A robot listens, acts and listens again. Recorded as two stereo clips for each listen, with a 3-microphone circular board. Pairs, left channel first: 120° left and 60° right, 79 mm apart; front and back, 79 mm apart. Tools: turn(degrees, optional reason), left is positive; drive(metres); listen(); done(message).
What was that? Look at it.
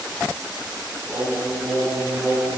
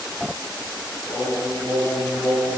turn(degrees=15, reason="The singing: 15° left.")
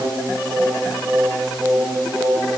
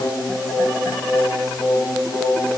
turn(degrees=-20, reason="The singing is now 20° right.")
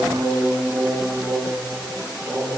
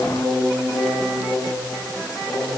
turn(degrees=-10, reason="The singing is now 10° right.")
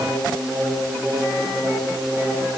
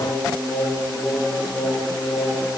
done("Found it: singing, straight ahead.")